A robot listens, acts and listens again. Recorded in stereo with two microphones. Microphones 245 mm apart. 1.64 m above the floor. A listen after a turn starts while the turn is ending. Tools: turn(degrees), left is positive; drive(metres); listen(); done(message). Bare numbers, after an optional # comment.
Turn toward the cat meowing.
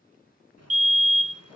listen()
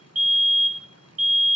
listen()
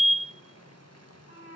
# The cat meowing: about 70° left or 110° left.
turn(70)
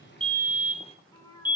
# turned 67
# So it is at 15° left.
turn(15)
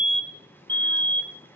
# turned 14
listen()
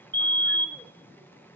listen()
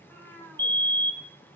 # The cat meowing is now 10° left.
turn(10)
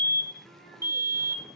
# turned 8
listen()
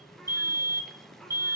listen()
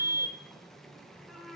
done("Facing the cat meowing.")